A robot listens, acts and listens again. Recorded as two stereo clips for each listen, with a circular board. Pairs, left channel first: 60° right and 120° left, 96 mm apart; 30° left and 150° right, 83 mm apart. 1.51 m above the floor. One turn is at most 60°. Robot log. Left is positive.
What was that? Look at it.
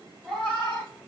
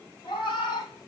note: The cat meowing: 25° left.
cmd yaw +25
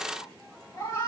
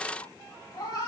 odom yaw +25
end: Found it: a cat meowing, straight ahead.